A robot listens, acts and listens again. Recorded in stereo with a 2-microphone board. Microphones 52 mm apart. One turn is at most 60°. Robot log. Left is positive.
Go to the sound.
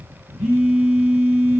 note: The phone buzzing: about 15° right or 165° right.
cmd yaw -15
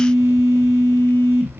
cmd fwd 1.0
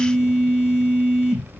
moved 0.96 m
note: The phone buzzing is now 15° right.
cmd yaw -15
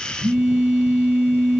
cmd fwd 1.0
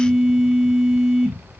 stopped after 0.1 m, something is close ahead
end: Arrived at the phone buzzing, straight ahead.